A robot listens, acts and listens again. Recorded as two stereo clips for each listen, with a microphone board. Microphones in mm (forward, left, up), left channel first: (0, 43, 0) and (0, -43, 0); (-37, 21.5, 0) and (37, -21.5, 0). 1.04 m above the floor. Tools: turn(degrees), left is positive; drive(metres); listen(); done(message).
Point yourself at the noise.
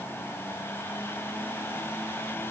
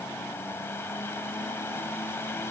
listen()
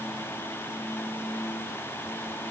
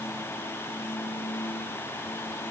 listen()
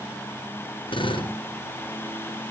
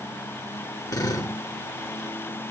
turn(degrees=105)
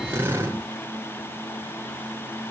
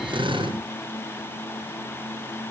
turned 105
turn(degrees=-25)
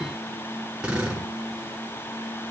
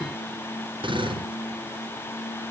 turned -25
turn(degrees=-10)
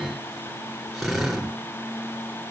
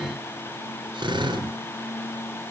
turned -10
done("Facing the drill, over 4 m away.")